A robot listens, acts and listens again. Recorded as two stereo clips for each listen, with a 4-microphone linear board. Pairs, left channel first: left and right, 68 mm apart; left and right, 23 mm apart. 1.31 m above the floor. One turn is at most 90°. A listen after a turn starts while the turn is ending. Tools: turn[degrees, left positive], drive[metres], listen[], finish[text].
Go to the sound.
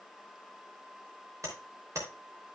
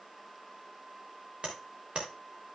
Thought: The tapping: about 50° right or 130° right.
Action: turn[-50]
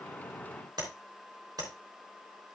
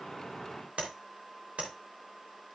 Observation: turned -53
Thought: So it is at 75° right.
Action: turn[-75]
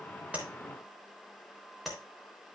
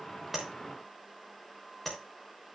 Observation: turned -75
Action: drive[1.0]
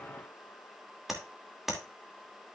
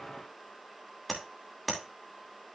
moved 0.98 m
Action: drive[1.0]
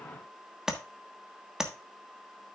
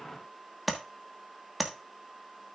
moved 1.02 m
Thought: The tapping is now 10° right.
Action: turn[-10]
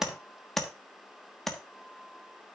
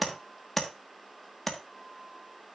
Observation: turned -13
Action: drive[1.0]
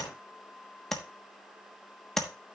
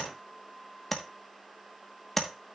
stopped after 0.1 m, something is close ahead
Action: finish[Arrived at the tapping, straight ahead.]